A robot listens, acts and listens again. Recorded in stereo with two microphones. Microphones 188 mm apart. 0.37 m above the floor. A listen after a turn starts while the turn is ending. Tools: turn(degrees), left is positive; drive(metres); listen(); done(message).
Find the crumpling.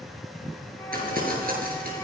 turn(degrees=-50)
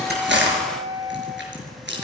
turn(degrees=-80)
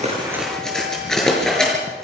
done("Found it: crumpling, straight ahead.")